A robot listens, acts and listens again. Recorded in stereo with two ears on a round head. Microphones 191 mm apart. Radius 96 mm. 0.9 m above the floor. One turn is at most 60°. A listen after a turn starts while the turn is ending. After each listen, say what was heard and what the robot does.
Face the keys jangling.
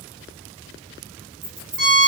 Turn 30° right.
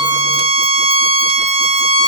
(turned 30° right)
Keep listening.
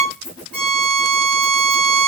Keep listening.
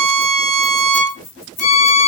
So it is at 15° left. Turn 15° left.
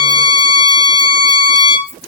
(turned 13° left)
Keep listening.
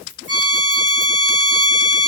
Keep listening.
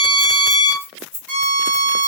Facing the keys jangling, 1 to 2 m away.